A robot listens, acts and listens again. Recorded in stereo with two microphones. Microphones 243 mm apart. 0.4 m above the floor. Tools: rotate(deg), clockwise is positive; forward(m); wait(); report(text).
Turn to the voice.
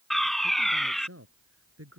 rotate(70)
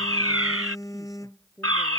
report("Found it: a man speaking, straight ahead.")